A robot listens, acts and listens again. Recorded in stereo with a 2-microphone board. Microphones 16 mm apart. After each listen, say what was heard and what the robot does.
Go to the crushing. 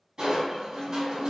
The crushing: about 45° right or 135° right. Turn 45° right.
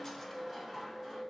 Drive 1.0 m forward.
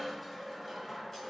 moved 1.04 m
Drive 1.0 m forward.
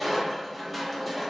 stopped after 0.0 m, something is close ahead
I am next to the crushing.